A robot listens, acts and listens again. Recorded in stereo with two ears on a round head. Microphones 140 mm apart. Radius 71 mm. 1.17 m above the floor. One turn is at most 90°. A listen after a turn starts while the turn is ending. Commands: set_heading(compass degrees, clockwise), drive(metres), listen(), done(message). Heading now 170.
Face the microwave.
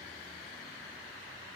listen()
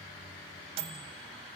set_heading(210)
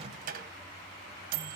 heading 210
set_heading(300)
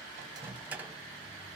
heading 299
set_heading(309)
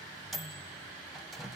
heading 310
done("Facing the microwave, under 1 m away.")